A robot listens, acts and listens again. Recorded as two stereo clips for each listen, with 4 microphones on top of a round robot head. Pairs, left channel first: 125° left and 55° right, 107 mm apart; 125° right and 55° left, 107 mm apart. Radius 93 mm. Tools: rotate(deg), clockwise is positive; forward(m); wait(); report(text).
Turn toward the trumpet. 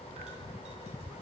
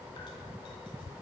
wait()
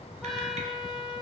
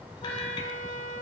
rotate(150)
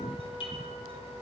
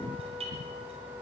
wait()
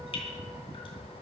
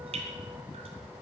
wait()
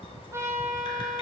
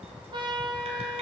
rotate(-10)
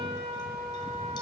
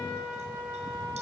report("Facing the trumpet.")